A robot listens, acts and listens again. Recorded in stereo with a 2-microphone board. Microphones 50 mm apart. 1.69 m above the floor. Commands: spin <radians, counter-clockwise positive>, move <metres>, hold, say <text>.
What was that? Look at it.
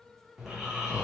spin -0.52
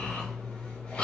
spin 0.35
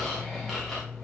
say Facing the snoring, 1 to 2 m away.